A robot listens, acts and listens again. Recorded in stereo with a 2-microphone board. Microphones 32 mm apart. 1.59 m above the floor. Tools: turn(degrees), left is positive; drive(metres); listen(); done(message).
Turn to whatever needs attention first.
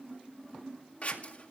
listen()
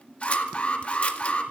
turn(degrees=40)
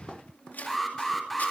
done("Found it: an alarm, straight ahead.")